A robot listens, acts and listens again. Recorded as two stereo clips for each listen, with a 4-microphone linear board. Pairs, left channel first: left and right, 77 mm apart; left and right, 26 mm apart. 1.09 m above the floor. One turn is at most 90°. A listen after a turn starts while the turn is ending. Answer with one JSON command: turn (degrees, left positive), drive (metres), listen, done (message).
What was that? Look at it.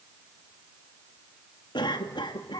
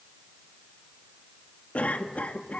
{"turn": 90}
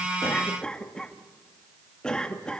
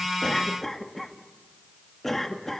{"turn": 10}
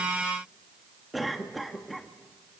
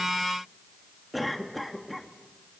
{"done": "Facing the cough."}